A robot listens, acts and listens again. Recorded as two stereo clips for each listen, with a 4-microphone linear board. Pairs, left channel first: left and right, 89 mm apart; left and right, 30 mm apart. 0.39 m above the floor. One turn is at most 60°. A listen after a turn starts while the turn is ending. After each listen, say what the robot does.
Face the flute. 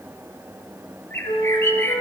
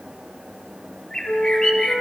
Turn 60° left.
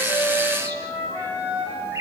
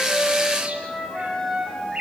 Turn 25° left.
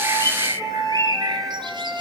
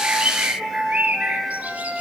Found it: a flute, straight ahead, over 4 m away.